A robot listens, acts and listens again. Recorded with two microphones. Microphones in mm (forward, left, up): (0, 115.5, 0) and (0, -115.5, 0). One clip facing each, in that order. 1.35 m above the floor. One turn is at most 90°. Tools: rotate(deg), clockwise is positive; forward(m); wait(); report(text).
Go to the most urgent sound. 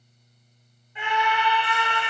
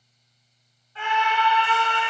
rotate(-15)
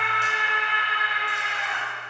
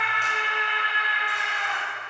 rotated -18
forward(1.0)
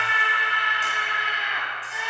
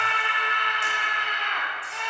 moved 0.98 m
rotate(-10)
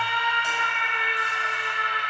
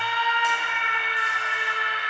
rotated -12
forward(1.0)
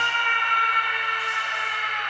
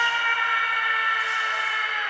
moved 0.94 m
rotate(10)
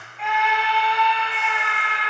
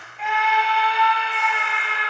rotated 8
forward(1.0)
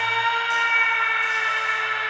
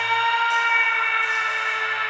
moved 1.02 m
forward(1.0)
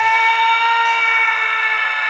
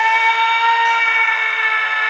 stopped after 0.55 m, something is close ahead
report("Arrived at the scream, straight ahead.")